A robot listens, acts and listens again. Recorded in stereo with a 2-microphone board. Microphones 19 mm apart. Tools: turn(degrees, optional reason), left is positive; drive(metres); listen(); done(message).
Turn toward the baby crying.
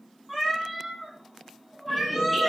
listen()
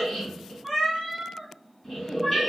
listen()
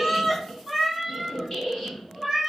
done("I can't make out a baby crying to turn to.")